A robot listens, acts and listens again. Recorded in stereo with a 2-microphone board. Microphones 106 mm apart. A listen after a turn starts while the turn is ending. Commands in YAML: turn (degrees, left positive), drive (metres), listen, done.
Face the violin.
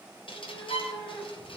turn: 65
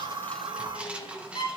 turn: 45
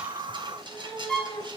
done: "Facing the violin."